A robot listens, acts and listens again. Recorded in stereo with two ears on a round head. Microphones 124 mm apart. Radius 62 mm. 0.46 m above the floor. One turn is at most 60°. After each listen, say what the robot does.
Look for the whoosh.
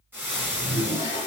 Turn 55° right.
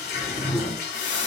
Turn 10° right.
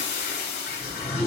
Facing the whoosh, 1 to 2 m away.